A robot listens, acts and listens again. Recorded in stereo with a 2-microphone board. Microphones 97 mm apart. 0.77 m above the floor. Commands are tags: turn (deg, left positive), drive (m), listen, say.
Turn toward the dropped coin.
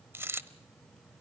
<turn deg="-25"/>
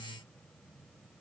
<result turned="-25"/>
<listen/>
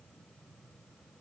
<say>I heard a dropped coin, but can't make it out now. It was about straight ahead or 130° right.</say>